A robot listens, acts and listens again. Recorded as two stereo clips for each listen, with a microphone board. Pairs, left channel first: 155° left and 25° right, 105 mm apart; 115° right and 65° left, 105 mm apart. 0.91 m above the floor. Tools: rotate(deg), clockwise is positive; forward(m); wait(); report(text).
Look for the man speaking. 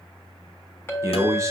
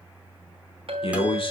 rotate(80)
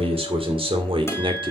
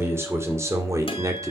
rotate(-10)
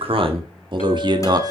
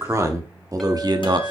rotate(-25)
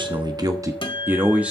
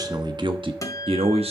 rotate(-55)
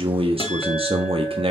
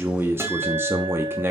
report("Facing the man speaking.")